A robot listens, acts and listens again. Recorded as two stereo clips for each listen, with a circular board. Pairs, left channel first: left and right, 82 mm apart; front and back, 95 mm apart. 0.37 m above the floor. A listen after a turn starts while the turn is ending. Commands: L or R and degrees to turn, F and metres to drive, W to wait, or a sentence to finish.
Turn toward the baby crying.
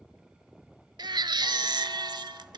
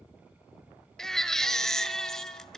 R85
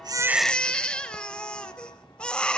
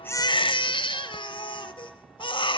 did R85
L15
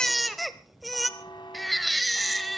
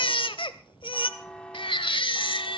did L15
Found it: a baby crying, straight ahead.